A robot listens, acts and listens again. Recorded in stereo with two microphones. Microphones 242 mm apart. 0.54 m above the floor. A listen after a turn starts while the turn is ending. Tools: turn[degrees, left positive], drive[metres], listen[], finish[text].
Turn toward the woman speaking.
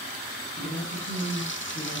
Thought: The woman speaking: about 60° left or 120° left.
Action: turn[60]
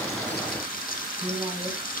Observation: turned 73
Thought: So it is at 10° right.
Action: turn[-10]
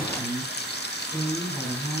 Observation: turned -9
Action: finish[Found it: a woman speaking, straight ahead, over 4 m away.]